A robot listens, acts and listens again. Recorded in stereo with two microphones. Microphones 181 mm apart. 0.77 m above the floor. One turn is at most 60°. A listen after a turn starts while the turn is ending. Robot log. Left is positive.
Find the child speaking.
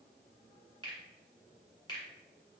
cmd idle
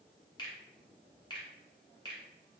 cmd idle
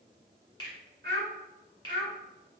note: The child speaking: about 65° right or 115° right.
cmd yaw -60
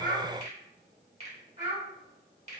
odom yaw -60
note: So it is at 50° right.
cmd yaw -50
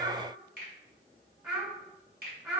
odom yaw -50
note: The child speaking is now 25° right.
cmd yaw -25
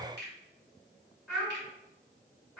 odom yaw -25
note: The child speaking is now 10° right.
cmd yaw -10
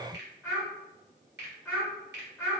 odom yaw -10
end: Found it: a child speaking, straight ahead, 1 to 2 m away.